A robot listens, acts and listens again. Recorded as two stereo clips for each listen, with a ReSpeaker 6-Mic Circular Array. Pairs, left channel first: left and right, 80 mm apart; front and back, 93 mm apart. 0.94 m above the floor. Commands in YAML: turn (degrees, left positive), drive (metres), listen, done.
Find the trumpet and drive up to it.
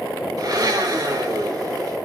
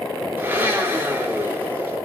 listen: true
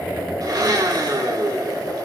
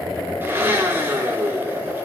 listen: true
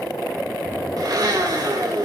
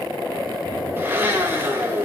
done: "I can't make out a trumpet, only a blender."